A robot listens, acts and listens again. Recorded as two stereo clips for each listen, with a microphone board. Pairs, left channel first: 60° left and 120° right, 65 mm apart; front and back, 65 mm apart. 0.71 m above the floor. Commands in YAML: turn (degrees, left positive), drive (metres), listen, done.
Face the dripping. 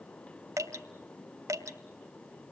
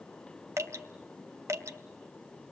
turn: -145
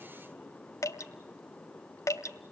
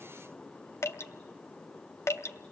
turn: 35
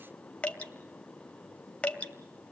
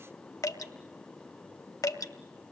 turn: -10
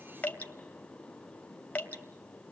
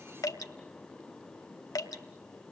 done: "Facing the dripping."